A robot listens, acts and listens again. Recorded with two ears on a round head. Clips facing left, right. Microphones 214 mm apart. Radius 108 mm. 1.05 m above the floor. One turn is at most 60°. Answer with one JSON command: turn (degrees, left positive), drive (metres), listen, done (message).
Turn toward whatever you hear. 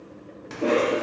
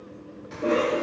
{"turn": 60}
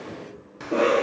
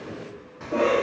{"turn": 50}
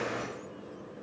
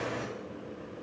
{"turn": 15}
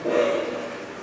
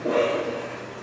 {"done": "Found it: a cough, straight ahead, under 1 m away."}